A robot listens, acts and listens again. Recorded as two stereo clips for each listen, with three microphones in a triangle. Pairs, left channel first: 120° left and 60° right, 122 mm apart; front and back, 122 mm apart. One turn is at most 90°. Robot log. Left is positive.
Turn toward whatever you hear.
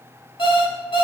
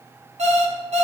note: The alarm clock: 165° left.
cmd yaw +90
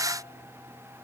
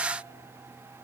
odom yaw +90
note: Nothing new. It was at 75° left.
cmd yaw +75
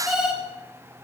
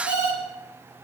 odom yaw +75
note: The alarm clock is now 25° left.
cmd yaw +25
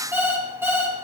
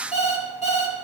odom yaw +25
note: The alarm clock is now 10° left.
cmd yaw +10
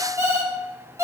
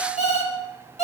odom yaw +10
end: Facing the alarm clock, 2 to 4 m away.